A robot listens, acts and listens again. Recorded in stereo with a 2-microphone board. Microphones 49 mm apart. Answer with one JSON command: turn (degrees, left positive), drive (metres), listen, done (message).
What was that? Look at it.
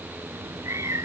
{"turn": -90}
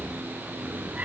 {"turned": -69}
{"turn": -30}
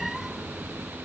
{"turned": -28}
{"done": "Facing the cat meowing."}